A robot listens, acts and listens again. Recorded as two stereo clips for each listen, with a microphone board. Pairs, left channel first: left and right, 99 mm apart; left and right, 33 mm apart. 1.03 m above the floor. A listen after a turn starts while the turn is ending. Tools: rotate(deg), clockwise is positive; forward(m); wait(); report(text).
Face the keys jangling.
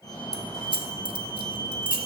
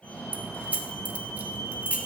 rotate(55)
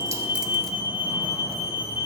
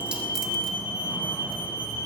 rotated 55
wait()
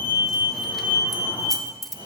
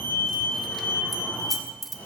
report("Facing the keys jangling.")